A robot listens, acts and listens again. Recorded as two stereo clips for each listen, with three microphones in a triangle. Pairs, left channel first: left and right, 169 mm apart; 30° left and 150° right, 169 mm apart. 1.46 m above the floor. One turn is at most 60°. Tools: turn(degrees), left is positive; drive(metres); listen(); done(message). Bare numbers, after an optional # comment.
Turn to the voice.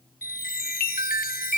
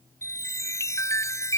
listen()
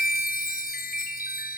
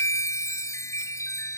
listen()
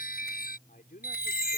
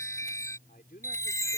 # The man speaking: 60° left.
turn(60)
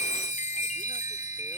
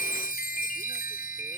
listen()
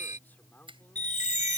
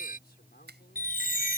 # The man speaking is now 10° left.
turn(10)
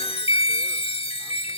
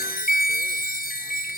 listen()
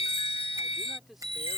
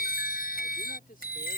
done("Facing the man speaking.")